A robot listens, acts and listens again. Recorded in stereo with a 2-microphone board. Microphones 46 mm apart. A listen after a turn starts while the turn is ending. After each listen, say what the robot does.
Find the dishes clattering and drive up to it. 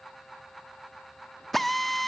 Keep listening.
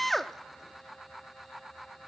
Keep listening.
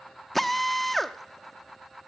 I can't make out dishes clattering to turn to.